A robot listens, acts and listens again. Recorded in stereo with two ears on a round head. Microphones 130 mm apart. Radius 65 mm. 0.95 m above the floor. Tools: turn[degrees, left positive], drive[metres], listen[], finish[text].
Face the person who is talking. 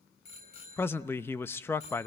Thought: The man speaking: about 15° left or 165° left.
Action: turn[15]
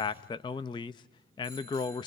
Thought: So it is at 150° left.
Action: turn[150]
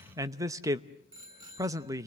Thought: The man speaking is now 25° right.
Action: turn[-25]
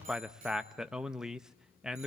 Action: finish[Facing the man speaking.]